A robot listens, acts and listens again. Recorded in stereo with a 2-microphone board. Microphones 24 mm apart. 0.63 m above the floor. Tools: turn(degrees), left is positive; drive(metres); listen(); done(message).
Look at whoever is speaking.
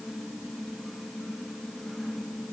listen()
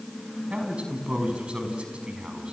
turn(degrees=-55)
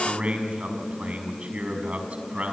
turn(degrees=-70)
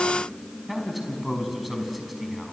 done("Found it: a man speaking, straight ahead, over 4 m away.")